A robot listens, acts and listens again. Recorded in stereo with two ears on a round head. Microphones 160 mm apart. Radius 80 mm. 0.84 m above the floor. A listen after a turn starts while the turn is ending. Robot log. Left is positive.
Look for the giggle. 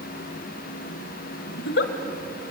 note: The giggle: about 65° left or 115° left.
cmd yaw +65
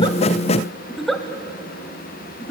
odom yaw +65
end: Facing the giggle.